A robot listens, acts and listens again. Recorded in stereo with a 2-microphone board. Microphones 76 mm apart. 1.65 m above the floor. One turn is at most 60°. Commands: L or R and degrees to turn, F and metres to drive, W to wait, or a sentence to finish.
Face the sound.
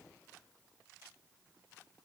W
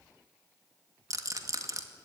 R50
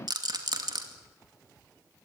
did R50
R60
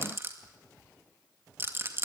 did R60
R35
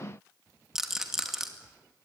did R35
Found it: a rattle, straight ahead, 2 to 4 m away.